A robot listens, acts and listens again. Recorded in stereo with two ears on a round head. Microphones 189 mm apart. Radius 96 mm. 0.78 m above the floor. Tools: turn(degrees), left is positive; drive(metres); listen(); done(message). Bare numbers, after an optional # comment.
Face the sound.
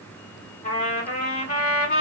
# The trumpet: about 35° left or 145° left.
turn(35)
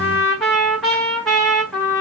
done("Found it: a trumpet, straight ahead, 1 to 2 m away.")